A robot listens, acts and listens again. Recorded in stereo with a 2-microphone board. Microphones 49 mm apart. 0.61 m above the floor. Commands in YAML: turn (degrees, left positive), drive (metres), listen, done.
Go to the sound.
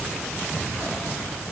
listen: true
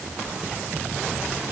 listen: true
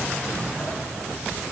done: "I can't make out anything to turn to."